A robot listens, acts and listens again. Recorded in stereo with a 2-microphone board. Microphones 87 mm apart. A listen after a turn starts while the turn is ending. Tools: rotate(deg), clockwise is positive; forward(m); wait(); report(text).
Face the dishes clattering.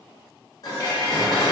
rotate(-40)
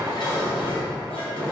rotate(-95)
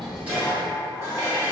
rotate(30)
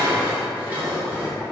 rotate(25)
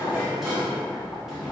report("Found it: dishes clattering, straight ahead, 1 to 2 m away.")